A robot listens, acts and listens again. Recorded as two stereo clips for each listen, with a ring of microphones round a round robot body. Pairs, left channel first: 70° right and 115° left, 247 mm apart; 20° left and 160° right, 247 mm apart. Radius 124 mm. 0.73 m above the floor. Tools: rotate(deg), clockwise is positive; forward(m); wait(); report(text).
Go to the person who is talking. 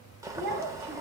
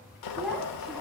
rotate(-115)
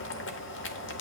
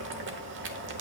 wait()
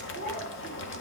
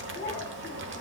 rotate(30)
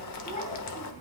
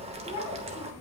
wait()
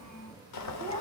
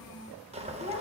rotate(10)
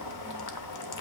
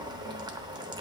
wait()
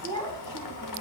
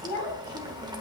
forward(1.0)
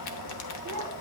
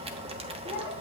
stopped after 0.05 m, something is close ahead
report("Blocked. The child speaking is further on, straight ahead.")